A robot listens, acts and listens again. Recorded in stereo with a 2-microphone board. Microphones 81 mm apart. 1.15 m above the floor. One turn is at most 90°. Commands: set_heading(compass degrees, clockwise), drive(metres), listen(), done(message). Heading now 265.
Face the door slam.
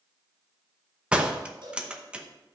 set_heading(295)
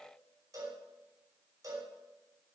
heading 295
listen()
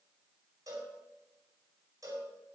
done("I heard a door slam, but can't make it out now. It was about 15° left or 135° right.")